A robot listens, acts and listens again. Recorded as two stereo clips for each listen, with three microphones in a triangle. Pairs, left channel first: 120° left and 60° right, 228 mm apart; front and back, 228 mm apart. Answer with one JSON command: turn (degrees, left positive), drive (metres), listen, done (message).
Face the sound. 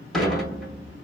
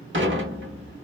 {"turn": -150}
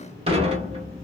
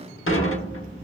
{"done": "Facing the dishes clattering, 1 to 2 m away."}